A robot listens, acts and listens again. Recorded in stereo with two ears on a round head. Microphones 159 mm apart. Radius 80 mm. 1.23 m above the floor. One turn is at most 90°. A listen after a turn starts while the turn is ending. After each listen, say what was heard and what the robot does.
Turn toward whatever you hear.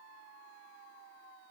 Keep listening.
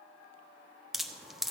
Turn 30° left.
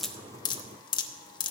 So it is at 150° left. Turn 90° left.
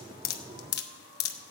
The dripping is now 95° left. Turn 90° left.
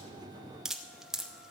Found it: dripping, straight ahead, under 1 m away.